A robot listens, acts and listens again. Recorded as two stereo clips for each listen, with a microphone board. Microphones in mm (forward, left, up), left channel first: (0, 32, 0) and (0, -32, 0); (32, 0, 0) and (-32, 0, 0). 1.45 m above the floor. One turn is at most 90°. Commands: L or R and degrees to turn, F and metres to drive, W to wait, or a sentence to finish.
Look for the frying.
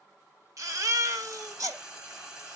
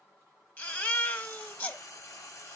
R15
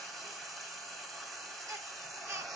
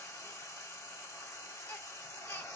Found it: frying, straight ahead.